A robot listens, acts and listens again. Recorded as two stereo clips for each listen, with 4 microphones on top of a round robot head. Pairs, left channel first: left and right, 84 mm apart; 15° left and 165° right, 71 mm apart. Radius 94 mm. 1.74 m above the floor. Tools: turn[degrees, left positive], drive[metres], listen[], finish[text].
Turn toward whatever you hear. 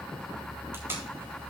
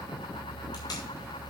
Thought: The tape being pulled: 25° right.
Action: turn[-25]
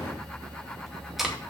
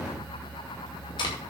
Action: finish[Facing the tape being pulled, 2 to 4 m away.]